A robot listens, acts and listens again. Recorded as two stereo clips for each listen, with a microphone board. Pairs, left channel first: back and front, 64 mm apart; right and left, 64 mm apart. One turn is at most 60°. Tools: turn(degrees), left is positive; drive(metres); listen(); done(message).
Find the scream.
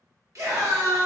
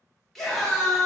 done("Found it: a scream, straight ahead, 1 to 2 m away.")